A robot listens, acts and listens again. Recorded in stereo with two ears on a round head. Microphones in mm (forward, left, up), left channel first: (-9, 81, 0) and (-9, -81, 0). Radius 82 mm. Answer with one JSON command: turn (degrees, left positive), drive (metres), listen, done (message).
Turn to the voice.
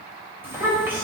{"turn": -30}
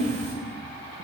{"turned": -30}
{"turn": 20}
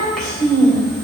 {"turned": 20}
{"done": "Found it: a child speaking, straight ahead, 2 to 4 m away."}